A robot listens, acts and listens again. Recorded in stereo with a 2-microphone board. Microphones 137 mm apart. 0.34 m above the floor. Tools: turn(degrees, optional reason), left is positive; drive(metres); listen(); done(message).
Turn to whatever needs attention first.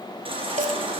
turn(degrees=-45, reason="The baby crying: about 45° right or 135° right.")
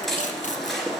done("Found it: a baby crying, straight ahead.")